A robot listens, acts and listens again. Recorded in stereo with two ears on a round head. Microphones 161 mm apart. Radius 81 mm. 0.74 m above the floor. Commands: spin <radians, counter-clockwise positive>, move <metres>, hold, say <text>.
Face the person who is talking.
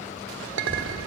spin 0.44
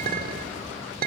say Found it: a child speaking, straight ahead.